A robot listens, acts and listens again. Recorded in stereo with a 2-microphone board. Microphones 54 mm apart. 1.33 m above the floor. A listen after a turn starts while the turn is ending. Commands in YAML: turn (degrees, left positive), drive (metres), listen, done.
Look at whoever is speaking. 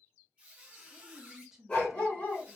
turn: -30
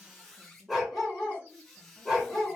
turn: -140
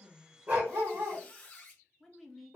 done: "Facing the woman speaking, under 1 m away."